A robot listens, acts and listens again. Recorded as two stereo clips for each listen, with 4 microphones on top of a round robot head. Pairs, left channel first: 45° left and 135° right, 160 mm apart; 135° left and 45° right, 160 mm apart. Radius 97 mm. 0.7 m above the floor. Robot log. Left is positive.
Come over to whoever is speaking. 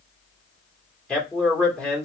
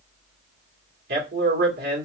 note: The man speaking: 40° right.
cmd yaw -40
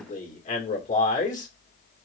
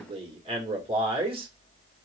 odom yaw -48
cmd fwd 1.0
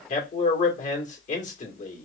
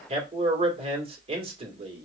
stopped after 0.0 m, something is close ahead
end: Something is in my way. I am facing the man speaking but have not reached it.